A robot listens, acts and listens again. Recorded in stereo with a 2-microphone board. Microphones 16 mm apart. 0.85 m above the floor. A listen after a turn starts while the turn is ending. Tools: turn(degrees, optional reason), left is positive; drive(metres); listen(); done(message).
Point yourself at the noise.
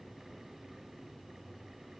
listen()
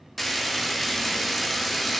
turn(degrees=30)
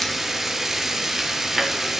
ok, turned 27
turn(degrees=-20, reason="So it is at 20° right.")
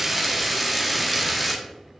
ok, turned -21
done("Found it: frying, straight ahead.")